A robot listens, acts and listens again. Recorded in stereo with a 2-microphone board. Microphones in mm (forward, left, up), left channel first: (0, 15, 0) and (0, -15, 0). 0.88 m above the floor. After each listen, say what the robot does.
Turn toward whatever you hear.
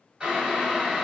Turn 25° right.
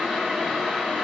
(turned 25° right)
Found it: boiling, straight ahead.